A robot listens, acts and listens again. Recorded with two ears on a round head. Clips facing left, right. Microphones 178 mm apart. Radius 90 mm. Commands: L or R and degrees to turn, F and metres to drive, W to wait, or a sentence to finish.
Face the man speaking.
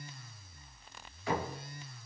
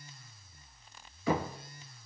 W
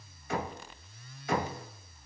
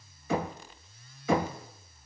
W
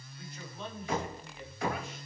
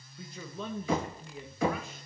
R90
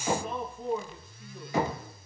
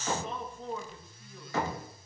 L10
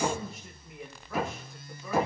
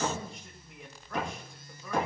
Facing the man speaking, 2 to 4 m away.